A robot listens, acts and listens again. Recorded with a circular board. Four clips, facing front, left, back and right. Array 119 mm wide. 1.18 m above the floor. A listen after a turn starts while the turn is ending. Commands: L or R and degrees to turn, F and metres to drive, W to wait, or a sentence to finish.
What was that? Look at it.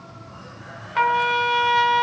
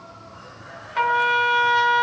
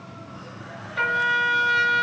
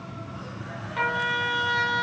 L25
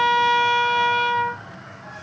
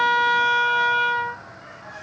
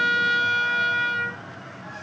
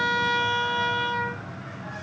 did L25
Found it: a trumpet, straight ahead, over 4 m away.